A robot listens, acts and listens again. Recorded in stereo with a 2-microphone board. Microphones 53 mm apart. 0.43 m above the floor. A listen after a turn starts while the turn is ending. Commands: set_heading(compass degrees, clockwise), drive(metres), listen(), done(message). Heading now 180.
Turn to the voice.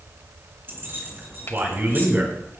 set_heading(225)
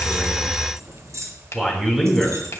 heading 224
done("Facing the man speaking.")